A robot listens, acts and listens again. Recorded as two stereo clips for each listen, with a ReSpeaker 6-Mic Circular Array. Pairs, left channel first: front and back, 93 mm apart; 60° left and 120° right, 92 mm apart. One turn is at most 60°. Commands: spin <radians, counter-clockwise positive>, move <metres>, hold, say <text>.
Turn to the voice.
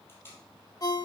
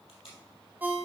hold
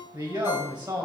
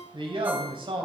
spin -1.05
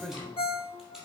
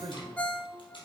spin -1.05
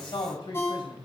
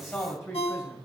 say Found it: a man speaking, straight ahead.